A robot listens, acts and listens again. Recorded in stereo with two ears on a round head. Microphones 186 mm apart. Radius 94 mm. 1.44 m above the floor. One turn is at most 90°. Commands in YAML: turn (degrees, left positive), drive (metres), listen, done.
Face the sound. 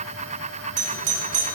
turn: -90
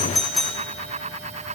done: "Found it: a doorbell, straight ahead, 1 to 2 m away."